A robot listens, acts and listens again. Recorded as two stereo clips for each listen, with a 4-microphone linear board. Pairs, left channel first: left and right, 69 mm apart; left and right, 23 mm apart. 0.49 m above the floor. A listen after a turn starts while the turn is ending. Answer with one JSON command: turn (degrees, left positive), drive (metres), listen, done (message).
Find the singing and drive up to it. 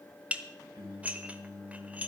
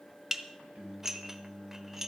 {"turn": -75}
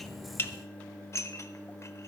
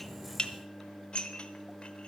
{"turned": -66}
{"turn": -20}
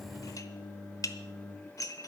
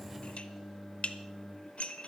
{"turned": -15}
{"drive": 1.0}
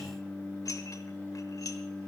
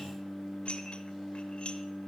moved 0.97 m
{"turn": -10}
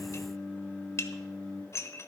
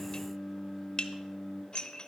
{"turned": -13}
{"drive": 1.0}
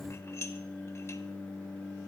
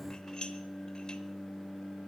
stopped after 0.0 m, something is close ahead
{"done": "Something is in my way. I am facing the singing but have not reached it."}